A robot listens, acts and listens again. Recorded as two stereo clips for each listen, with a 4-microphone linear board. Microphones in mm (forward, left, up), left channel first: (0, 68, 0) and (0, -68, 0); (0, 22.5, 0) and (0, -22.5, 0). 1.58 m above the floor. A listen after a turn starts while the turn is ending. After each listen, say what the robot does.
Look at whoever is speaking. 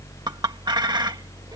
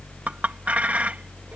Keep listening.
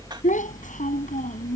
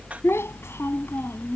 Turn 70° left.
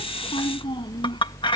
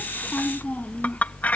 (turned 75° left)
Keep listening.
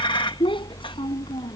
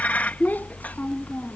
Turn 40° left.
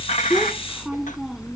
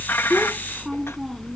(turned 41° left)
Keep listening.
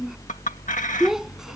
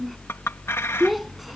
Facing the child speaking.